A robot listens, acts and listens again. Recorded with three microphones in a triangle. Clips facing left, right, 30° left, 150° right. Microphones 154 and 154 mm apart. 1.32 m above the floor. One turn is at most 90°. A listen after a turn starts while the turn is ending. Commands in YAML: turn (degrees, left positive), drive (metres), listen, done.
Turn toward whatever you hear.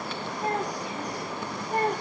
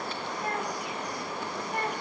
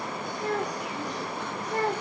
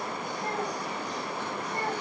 turn: 35
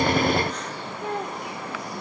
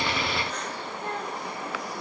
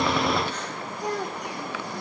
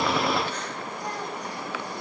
turn: 15
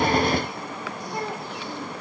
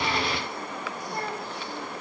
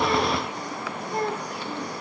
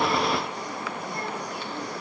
turn: 15
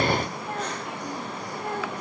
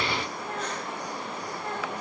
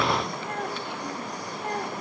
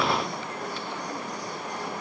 listen: true
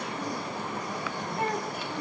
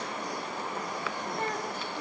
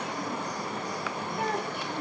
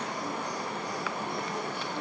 turn: 10
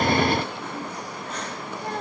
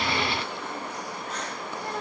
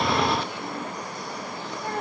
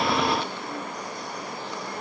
listen: true
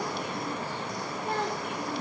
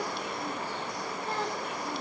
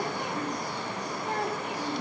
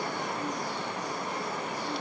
listen: true
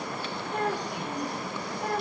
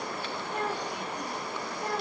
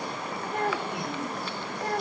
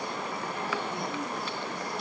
done: "Found it: a child speaking, straight ahead."